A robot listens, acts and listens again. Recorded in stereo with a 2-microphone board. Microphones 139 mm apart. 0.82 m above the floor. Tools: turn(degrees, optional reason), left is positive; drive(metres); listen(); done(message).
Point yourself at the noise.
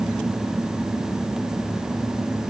listen()
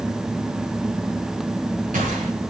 turn(degrees=-90)
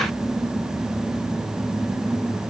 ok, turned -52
turn(degrees=-40, reason="Nothing new. It was at 40° right.")
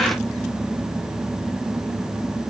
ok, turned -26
turn(degrees=-10, reason="Nothing new. It was at 10° right.")
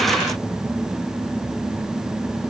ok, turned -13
done("Facing where the gunshot came from. I can't hear it now.")